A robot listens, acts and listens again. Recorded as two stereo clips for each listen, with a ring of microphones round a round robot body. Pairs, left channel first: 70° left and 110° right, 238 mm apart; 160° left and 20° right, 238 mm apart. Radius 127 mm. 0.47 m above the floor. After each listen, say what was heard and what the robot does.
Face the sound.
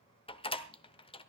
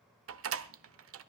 Facing the door slam, 1 to 2 m away.